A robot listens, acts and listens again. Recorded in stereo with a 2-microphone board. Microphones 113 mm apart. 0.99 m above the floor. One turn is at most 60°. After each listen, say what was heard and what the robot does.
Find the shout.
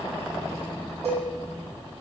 Keep listening.
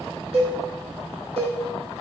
Keep listening.
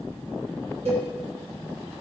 I can't make out a shout to turn to.